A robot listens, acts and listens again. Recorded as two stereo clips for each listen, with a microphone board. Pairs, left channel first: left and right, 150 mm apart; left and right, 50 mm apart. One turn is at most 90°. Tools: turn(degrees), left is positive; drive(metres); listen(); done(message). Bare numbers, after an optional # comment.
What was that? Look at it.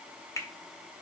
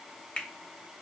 # The finger snap: about 20° left or 160° left.
turn(20)
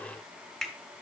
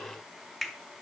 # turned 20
done("Facing the finger snap.")